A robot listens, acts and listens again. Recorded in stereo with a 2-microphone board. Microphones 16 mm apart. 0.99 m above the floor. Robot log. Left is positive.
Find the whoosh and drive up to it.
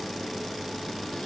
cmd idle
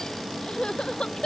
cmd idle
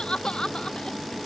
end: I can't make out a whoosh, only crying.